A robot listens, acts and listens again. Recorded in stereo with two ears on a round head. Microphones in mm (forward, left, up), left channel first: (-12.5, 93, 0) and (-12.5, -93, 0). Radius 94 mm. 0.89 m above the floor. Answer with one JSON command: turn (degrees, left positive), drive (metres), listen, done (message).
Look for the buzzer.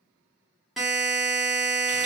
{"turn": 30}
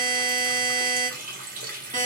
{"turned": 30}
{"turn": -30}
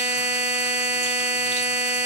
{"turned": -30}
{"done": "Facing the buzzer, under 1 m away."}